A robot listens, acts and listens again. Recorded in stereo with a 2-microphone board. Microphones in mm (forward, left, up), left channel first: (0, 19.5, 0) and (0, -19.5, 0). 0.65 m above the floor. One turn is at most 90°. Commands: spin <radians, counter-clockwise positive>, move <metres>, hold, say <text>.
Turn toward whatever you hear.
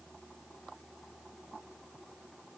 hold
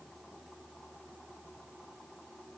hold
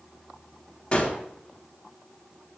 spin 0.44
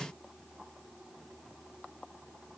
hold
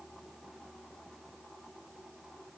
say I heard a gunshot, but can't make it out now. It was about straight ahead or 130° left.